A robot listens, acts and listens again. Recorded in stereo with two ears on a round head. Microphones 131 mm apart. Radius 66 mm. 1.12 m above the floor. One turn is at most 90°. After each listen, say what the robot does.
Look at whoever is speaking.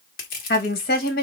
Turn 70° left.
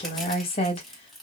Turn 40° left.
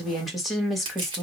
Facing the woman speaking.